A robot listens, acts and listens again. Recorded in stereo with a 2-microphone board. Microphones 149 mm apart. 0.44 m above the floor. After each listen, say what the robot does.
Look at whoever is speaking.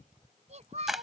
Turn 50° right.
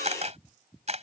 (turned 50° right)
Keep listening.
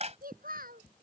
Turn 80° right.
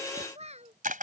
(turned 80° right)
Turn 50° right.
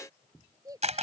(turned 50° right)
Turn 25° right.
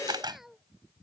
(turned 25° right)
Found it: a child speaking, straight ahead.